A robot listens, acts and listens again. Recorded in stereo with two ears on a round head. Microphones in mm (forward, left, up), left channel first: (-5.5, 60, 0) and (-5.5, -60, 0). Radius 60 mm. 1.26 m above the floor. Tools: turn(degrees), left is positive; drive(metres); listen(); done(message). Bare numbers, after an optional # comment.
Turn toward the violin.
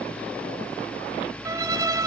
# The violin: about 25° right or 155° right.
turn(-25)
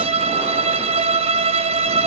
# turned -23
# So it is at 135° right.
turn(-135)
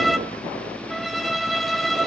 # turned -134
done("Facing the violin, 1 to 2 m away.")